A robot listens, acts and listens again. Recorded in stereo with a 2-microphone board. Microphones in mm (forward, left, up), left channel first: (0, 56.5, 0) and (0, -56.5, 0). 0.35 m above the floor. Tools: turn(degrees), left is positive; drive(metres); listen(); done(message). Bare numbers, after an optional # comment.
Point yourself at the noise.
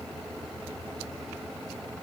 listen()
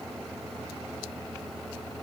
listen()
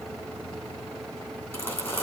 # The crumpling: about 20° left or 160° left.
turn(20)
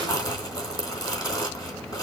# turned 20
# So it is at 140° left.
turn(140)
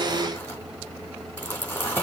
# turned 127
# The crumpling is now 15° left.
turn(15)
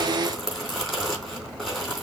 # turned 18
done("Found it: crumpling, straight ahead.")